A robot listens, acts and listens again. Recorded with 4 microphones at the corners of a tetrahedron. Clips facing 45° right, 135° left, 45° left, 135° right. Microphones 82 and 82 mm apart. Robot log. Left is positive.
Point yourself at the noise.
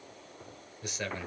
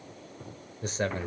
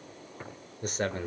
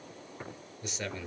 note: The man speaking: 85° left.
cmd yaw +85
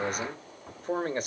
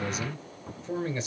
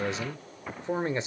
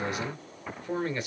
note: The man speaking is now 15° right.
cmd yaw -15
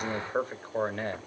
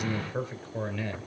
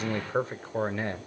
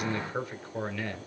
note: The man speaking is now 10° right.
cmd yaw -10
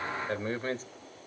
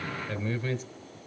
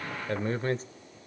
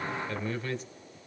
end: Found it: a man speaking, straight ahead, 1 to 2 m away.